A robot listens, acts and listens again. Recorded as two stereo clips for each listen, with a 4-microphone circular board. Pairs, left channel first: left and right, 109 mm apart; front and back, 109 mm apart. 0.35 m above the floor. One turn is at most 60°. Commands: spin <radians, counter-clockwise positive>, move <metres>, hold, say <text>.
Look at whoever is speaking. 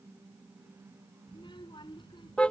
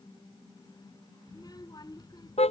spin 0.87
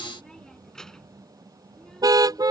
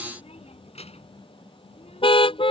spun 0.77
say Facing the child speaking.